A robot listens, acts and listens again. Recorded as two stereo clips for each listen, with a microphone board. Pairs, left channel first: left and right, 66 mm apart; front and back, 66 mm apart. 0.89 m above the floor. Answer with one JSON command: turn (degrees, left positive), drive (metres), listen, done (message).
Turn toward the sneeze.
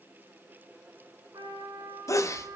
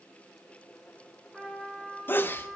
{"turn": 50}
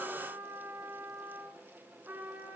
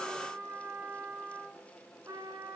{"done": "Facing where the sneeze came from. I can't hear it now."}